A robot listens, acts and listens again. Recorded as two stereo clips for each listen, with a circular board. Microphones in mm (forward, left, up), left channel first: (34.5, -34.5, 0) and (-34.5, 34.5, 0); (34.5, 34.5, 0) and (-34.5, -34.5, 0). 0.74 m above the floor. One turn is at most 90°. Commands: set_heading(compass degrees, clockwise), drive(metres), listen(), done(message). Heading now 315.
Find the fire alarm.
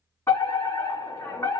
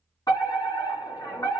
set_heading(305)
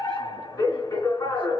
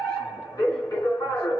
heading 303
done("Facing the fire alarm, 2 to 4 m away.")